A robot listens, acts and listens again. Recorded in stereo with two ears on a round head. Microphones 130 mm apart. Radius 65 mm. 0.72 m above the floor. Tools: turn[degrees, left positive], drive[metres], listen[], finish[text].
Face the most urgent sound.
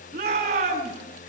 Thought: The shout: about 55° right or 125° right.
Action: turn[-55]
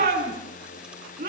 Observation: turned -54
Thought: So it is at 70° right.
Action: turn[-70]
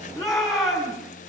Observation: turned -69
Action: finish[Found it: a shout, straight ahead.]